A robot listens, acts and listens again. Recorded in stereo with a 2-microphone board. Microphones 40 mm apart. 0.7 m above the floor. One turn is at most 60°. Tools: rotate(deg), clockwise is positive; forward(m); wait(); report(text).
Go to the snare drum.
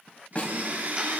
rotate(-35)
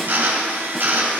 wait()
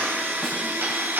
wait()
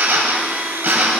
report("I heard a snare drum, but can't make it out now. It was about straight ahead or 110° left. I did not reach it.")